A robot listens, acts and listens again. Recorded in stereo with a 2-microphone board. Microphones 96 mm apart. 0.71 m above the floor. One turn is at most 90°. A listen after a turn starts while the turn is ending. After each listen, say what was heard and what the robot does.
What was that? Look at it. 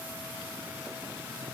Keep listening.
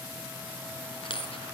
The dropped coin: about 75° left or 105° left. Turn 75° left.
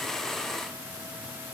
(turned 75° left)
Keep listening.
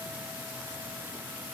I heard a dropped coin, but can't make it out now. It was about straight ahead or 30° left.